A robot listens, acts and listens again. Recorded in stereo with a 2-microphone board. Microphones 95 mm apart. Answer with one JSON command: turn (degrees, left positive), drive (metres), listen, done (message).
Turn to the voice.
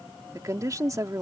{"turn": -35}
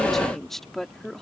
{"done": "Facing the woman speaking."}